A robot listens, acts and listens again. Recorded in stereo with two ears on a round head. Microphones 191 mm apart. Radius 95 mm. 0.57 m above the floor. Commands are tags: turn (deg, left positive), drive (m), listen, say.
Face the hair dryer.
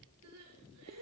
<listen/>
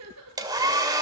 <turn deg="-20"/>
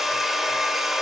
<say>Facing the hair dryer, 2 to 4 m away.</say>